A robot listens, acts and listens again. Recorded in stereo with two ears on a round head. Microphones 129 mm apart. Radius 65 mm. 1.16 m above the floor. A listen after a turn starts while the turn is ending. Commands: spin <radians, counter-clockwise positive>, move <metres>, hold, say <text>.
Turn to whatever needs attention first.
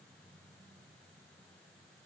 hold
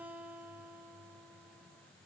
hold
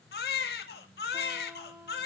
spin 1.57
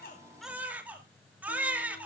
spin -0.17
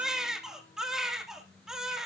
say Facing the baby crying.